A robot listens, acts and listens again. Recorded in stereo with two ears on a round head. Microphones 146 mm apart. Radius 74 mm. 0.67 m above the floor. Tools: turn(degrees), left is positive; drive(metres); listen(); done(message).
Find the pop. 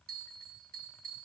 listen()
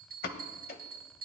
turn(degrees=60)
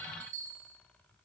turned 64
listen()
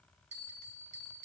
done("I heard a pop, but can't make it out now. It was about 5° right or 55° left.")